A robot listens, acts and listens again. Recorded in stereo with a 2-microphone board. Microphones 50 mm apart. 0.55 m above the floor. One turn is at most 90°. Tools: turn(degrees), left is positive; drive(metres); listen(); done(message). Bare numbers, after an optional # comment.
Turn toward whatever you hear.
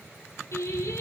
# The singing: about 75° left or 105° left.
turn(75)
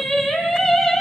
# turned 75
done("Found it: singing, straight ahead.")